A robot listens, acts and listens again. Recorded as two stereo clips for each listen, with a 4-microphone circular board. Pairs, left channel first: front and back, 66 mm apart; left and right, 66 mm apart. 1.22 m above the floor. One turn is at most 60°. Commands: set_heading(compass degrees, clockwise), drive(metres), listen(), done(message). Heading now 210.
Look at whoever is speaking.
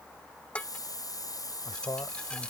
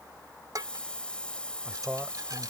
set_heading(230)
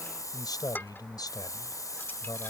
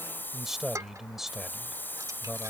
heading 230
done("Found it: a man speaking, straight ahead.")